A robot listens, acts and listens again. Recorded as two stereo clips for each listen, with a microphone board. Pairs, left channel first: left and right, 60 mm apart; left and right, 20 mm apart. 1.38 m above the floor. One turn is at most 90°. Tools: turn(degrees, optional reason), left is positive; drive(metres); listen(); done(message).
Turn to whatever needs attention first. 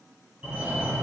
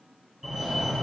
turn(degrees=-20, reason="The fire alarm: about 20° right or 160° right.")
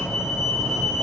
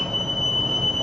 done("Found it: a fire alarm, straight ahead, 2 to 4 m away.")